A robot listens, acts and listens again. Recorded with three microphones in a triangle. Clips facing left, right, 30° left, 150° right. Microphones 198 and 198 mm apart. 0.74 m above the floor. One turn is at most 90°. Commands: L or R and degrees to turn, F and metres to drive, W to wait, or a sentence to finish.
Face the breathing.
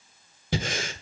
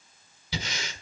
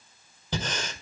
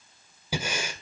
L90
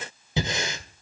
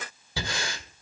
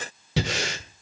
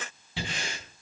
L20
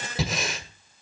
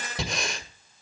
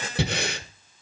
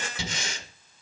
Found it: breathing, straight ahead, 1 to 2 m away.